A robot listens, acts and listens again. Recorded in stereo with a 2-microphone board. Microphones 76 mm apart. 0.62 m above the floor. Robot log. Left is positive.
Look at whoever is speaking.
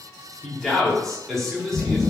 cmd yaw +30
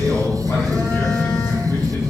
cmd idle
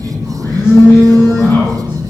cmd idle
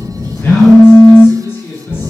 note: So it is at 145° left.
cmd yaw +145
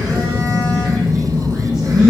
cmd idle
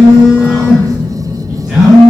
cmd idle
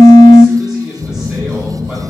end: Found it: a man speaking, straight ahead, 1 to 2 m away.